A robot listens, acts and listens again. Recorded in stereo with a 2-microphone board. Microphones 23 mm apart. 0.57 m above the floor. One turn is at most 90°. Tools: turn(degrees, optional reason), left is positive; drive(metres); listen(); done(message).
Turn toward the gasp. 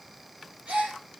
turn(degrees=-65, reason="The gasp: about 65° right or 115° right.")
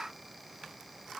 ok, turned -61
listen()
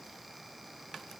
done("I heard a gasp, but can't make it out now. It was about 5° right or 55° right.")